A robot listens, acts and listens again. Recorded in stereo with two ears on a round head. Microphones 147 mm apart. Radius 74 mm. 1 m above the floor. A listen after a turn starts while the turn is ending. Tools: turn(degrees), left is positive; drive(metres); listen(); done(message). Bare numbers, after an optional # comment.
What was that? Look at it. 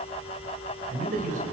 # The man speaking: about 50° right or 130° right.
turn(-50)
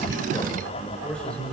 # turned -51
done("Found it: a man speaking, straight ahead, over 4 m away.")